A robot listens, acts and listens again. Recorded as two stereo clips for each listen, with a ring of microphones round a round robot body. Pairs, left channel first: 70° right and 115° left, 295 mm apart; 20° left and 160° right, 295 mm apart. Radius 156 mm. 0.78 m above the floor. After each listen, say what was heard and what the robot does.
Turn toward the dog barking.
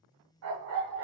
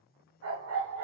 The dog barking: 160° left. Turn 160° left.
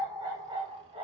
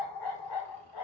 The dog barking is now 40° left. Turn 40° left.
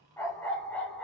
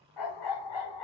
The dog barking is now 20° left. Turn 20° left.
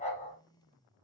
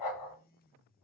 Facing the dog barking, 2 to 4 m away.